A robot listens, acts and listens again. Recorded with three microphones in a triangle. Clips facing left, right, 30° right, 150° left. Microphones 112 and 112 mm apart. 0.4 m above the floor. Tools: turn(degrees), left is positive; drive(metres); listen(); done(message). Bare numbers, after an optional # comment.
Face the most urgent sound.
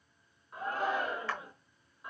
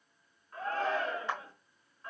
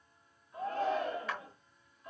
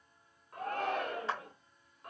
# The shout: 165° left.
turn(165)
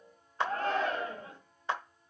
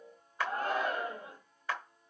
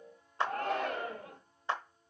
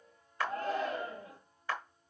# The shout is now 10° right.
turn(-10)
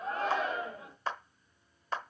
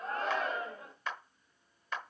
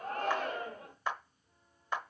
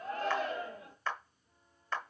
done("Found it: a shout, straight ahead.")